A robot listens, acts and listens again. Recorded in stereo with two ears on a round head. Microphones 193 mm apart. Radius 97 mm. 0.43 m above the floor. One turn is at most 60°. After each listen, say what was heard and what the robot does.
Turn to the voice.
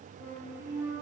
Keep listening.
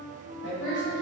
The woman speaking: about 55° left or 125° left. Turn 55° left.
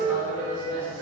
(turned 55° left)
So it is at 15° right. Turn 15° right.
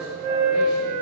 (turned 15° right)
Keep listening.
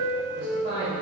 The woman speaking is now 45° right. Turn 45° right.
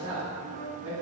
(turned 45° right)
The woman speaking is now 45° right. Turn 45° right.
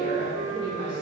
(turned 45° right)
The woman speaking is now 20° right. Turn 20° right.
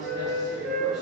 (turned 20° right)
Keep listening.
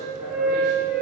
Keep listening.
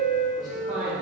Found it: a woman speaking, straight ahead, 2 to 4 m away.